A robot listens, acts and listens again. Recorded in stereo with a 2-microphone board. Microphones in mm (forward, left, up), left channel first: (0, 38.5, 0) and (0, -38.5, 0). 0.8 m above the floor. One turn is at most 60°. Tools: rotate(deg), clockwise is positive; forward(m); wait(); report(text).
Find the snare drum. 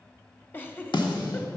rotate(-60)
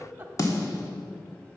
rotate(-45)
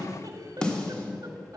rotate(-10)
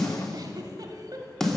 report("Found it: a snare drum, straight ahead.")